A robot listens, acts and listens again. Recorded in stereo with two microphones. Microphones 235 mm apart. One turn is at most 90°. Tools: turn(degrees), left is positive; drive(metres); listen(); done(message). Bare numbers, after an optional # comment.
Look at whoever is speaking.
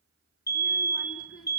# The child speaking: about 70° left or 110° left.
turn(70)
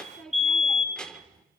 done("Facing the child speaking, 2 to 4 m away.")